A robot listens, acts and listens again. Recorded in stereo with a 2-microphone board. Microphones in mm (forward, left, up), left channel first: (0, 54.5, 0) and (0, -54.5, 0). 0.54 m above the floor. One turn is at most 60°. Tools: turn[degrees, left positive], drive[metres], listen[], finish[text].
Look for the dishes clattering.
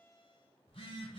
Action: listen[]
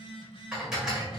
Action: turn[-30]
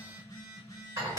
Thought: So it is at 140° right.
Action: turn[-60]
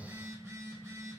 Thought: Nothing new. It was at 80° right.
Action: turn[-60]
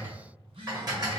Thought: The dishes clattering is now 40° right.
Action: turn[-40]
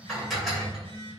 Action: finish[Facing the dishes clattering.]